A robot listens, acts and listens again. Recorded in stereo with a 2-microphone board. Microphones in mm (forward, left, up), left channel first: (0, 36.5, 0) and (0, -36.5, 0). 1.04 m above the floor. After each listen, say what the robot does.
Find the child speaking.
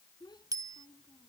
Turn 70° left.
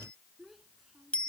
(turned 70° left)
Facing the child speaking.